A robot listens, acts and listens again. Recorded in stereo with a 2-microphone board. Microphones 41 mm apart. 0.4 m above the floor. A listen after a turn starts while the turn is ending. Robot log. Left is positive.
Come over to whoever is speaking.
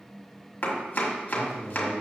note: The man speaking: about 65° left or 115° left.
cmd yaw +65
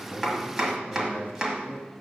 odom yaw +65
note: So it is at 40° left.
cmd yaw +40
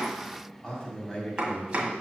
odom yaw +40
note: The man speaking is now 20° left.
cmd yaw +20
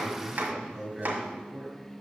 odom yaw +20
cmd fwd 1.0
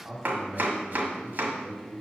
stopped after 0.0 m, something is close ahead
end: Blocked. The man speaking is further on, straight ahead.